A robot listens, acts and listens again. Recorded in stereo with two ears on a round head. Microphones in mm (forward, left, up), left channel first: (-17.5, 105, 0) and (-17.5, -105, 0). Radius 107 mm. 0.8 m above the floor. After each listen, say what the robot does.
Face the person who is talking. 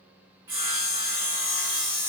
Keep listening.
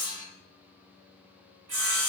Keep listening.
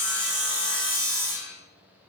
I can't make out anyone speaking, only sawing.